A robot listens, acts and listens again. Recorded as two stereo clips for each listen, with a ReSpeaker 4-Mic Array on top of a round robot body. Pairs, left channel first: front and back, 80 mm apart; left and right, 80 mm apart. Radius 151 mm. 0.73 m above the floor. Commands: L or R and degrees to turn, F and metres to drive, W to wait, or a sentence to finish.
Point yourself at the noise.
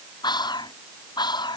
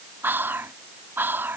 R25
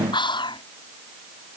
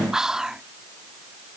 Found it: whispering, straight ahead.